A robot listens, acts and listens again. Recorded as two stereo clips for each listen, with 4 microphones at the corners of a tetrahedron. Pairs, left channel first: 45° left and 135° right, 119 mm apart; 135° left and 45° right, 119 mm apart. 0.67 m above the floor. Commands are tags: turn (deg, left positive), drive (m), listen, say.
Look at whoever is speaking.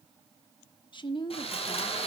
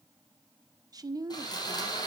<say>Found it: a woman speaking, straight ahead, 1 to 2 m away.</say>